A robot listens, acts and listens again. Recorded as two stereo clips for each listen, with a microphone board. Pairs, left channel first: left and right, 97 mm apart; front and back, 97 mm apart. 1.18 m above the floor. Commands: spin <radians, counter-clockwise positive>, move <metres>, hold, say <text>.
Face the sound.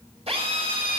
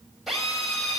spin -1.57
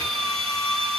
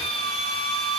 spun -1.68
say Facing the drill.